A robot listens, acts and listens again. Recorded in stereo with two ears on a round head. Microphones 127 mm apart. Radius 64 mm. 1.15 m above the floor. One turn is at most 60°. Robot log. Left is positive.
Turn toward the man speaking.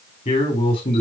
note: The man speaking: about 30° left or 150° left.
cmd yaw +30
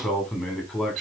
end: Found it: a man speaking, straight ahead.